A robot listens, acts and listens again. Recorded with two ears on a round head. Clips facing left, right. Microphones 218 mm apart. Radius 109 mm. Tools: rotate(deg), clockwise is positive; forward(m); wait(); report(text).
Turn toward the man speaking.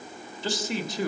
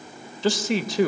rotate(60)
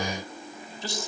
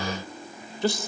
rotate(55)
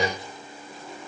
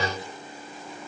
wait()
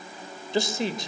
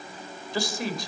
rotate(-20)
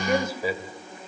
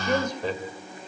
report("Facing the man speaking, 2 to 4 m away.")